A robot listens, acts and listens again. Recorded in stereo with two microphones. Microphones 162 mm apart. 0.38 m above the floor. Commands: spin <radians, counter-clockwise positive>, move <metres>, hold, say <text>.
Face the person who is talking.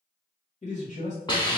spin 0.87
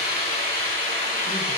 hold
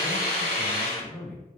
spin 0.26
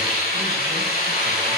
hold
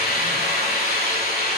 hold
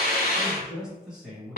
say Facing the man speaking, 1 to 2 m away.